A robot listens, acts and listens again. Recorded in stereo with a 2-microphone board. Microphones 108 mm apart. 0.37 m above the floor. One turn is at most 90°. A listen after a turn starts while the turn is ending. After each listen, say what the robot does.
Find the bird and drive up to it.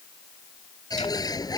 Turn 35° left.
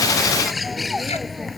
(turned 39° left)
Drive 1.0 m forward.
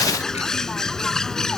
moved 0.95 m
Drive 1.0 m forward.
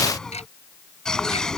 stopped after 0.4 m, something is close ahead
I am next to the bird.